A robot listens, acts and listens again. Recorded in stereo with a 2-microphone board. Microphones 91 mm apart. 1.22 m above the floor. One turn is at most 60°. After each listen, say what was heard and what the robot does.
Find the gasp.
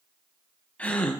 Turn 30° left.
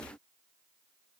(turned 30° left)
Keep listening.
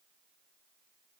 I heard a gasp, but can't make it out now. It was about 15° right or 135° left.